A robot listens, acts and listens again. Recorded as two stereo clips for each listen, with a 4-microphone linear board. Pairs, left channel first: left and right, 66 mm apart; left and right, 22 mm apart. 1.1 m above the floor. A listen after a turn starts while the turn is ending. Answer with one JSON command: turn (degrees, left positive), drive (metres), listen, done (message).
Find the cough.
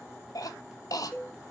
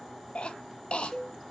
{"turn": 65}
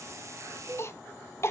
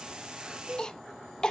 {"turn": 45}
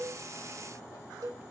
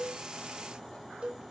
{"listen": true}
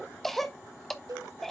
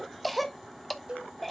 {"done": "Facing the cough."}